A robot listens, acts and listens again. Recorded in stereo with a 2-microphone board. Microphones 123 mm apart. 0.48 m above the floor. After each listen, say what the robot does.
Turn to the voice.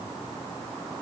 Keep listening.
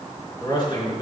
Turn 40° left.
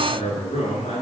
Turn 100° left.
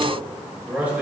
Turn 10° right.
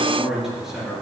Facing the man speaking.